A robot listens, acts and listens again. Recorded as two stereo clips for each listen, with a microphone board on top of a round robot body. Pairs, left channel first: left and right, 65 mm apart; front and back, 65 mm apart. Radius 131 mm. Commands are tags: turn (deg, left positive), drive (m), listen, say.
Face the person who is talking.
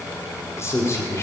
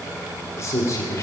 <turn deg="45"/>
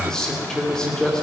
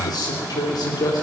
<turn deg="10"/>
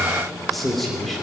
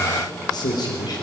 <say>Found it: a man speaking, straight ahead, 2 to 4 m away.</say>